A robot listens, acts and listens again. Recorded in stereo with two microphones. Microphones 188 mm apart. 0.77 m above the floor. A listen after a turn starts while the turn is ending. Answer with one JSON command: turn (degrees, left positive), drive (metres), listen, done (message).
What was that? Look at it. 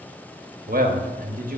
{"turn": -50}
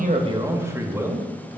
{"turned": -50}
{"turn": -15}
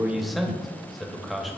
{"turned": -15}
{"done": "Facing the man speaking."}